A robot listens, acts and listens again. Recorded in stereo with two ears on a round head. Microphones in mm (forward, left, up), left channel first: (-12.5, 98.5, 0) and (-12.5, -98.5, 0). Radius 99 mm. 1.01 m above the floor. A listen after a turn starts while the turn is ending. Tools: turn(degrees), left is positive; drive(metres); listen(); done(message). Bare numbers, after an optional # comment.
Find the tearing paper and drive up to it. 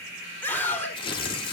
# The tearing paper: about 25° left or 155° left.
turn(25)
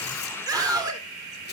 listen()
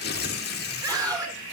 # So it is at 130° left.
turn(130)
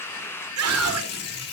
# The tearing paper is now 50° left.
turn(50)
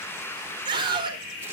listen()
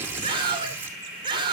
# The tearing paper is now 10° right.
turn(-10)
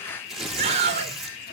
drive(1.0)
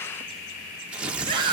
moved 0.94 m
drive(1.0)
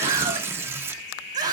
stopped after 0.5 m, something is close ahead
# The tearing paper is now 10° right.
turn(-10)
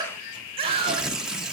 done("I am next to the tearing paper.")